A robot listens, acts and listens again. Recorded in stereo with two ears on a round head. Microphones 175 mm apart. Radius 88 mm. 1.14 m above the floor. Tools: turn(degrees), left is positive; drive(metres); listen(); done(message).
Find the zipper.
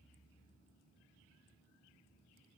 listen()
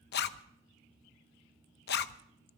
turn(degrees=60)
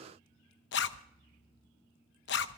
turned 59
turn(degrees=60)
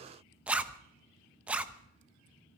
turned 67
done("Found it: a zipper, straight ahead, under 1 m away.")